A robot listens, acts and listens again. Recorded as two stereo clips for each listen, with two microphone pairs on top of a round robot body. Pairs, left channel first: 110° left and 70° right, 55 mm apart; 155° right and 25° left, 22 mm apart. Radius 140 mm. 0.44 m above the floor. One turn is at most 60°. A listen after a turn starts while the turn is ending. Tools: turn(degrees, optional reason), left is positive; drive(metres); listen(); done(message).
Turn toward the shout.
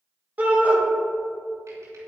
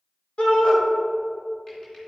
turn(degrees=-60, reason="The shout: 125° right.")
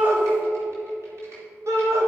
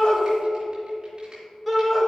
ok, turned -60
turn(degrees=-60, reason="The shout is now 65° right.")
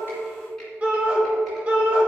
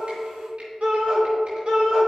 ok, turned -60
done("Facing the shout, 2 to 4 m away.")